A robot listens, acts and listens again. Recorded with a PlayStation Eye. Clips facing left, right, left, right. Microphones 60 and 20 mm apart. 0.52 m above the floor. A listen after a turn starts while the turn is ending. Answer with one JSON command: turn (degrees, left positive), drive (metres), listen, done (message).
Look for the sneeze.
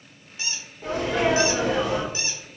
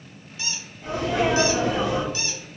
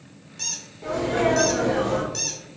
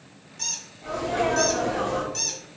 {"turn": 60}
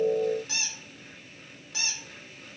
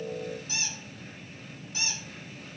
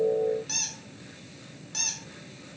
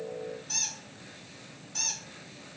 {"listen": true}
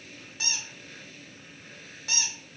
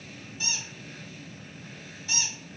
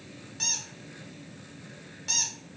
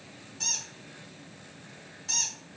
{"done": "I heard a sneeze, but can't make it out now. It was about straight ahead or 60° left."}